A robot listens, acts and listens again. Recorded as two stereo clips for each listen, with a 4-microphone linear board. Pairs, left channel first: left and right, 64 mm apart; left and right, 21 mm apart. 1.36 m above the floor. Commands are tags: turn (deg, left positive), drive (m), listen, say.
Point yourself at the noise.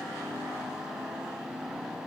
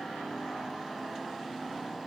<listen/>
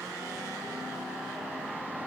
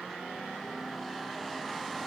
<listen/>
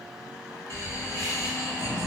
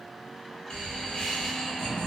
<turn deg="55"/>
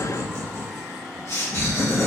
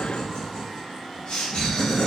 <turn deg="60"/>
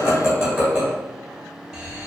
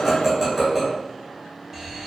<turn deg="-10"/>
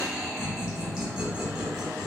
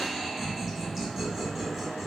<say>Facing the laughter.</say>